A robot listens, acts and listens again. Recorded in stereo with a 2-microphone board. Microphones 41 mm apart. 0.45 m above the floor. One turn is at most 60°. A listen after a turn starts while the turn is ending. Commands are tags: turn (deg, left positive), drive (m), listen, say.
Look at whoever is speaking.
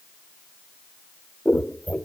<listen/>
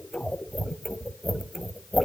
<listen/>
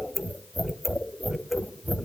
<say>I can't make out anyone speaking to turn to.</say>